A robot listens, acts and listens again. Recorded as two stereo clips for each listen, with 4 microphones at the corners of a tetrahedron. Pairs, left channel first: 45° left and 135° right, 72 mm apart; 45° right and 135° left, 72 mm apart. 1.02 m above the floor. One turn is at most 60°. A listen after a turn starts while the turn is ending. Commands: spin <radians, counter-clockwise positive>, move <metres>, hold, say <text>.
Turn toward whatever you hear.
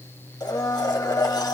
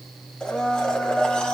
spin 0.52
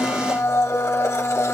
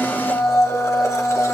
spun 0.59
say Found it: a blender, straight ahead, 1 to 2 m away.